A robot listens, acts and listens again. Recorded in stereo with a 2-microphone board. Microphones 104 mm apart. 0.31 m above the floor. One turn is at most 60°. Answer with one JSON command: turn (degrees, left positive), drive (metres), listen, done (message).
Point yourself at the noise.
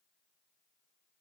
{"listen": true}
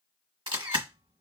{"turn": -55}
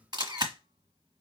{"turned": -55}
{"turn": -55}
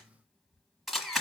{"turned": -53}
{"done": "Found it: a camera shutter, straight ahead."}